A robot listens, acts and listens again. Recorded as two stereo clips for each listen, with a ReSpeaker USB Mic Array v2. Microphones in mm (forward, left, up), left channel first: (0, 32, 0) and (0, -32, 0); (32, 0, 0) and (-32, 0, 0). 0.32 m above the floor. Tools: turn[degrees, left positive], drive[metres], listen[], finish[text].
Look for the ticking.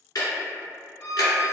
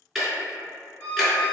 Thought: The ticking: 90° left.
Action: turn[90]
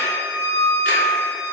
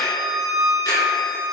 Action: listen[]
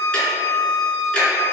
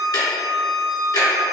Thought: The ticking is now 15° left.
Action: turn[15]
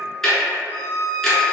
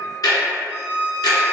Action: finish[Found it: ticking, straight ahead.]